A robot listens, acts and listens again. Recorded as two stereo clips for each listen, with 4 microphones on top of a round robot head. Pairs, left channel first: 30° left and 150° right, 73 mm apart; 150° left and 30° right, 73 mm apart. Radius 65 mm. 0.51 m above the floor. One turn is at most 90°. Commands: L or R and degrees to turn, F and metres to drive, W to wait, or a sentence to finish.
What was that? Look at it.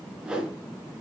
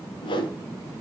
L90
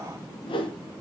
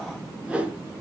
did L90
L45
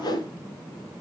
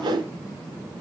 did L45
Found it: a whoosh, straight ahead, 2 to 4 m away.